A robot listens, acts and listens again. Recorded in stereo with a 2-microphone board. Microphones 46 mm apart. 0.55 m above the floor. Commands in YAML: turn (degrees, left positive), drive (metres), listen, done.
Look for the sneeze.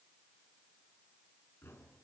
listen: true
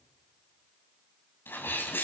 turn: 50
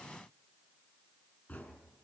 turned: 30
listen: true
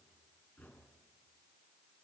done: "I heard a sneeze, but can't make it out now. It was about 20° left or 100° left."